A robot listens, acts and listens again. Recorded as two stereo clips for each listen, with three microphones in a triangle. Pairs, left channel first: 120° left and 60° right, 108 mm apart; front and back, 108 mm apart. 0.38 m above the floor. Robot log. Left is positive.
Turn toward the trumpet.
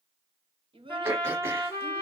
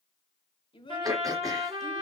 note: The trumpet: 175° right.
cmd yaw -175
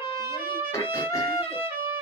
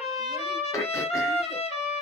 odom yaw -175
note: The trumpet is now 10° left.
cmd yaw +10
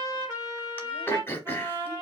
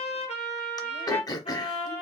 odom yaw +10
end: Facing the trumpet.